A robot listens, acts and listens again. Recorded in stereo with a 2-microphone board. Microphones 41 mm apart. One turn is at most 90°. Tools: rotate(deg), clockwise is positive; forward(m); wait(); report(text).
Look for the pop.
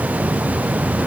wait()
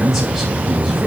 wait()
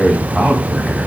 report("I can't make out a pop to turn to.")